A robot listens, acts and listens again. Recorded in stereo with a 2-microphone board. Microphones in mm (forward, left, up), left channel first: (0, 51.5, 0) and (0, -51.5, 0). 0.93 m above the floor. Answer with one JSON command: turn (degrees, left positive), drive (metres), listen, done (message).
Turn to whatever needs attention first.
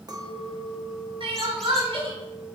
{"turn": -55}
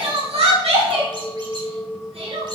{"turn": -70}
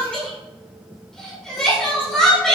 {"done": "Found it: crying, straight ahead."}